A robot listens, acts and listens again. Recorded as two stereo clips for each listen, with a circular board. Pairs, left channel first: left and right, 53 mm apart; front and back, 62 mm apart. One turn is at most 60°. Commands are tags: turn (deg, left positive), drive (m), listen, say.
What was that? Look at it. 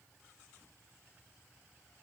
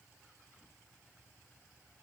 <listen/>
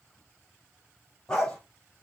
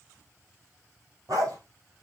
<turn deg="60"/>
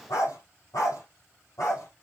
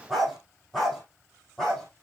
<turn deg="60"/>
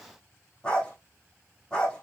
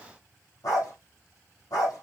<turn deg="20"/>
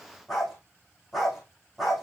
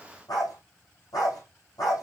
<say>Found it: a dog barking, straight ahead.</say>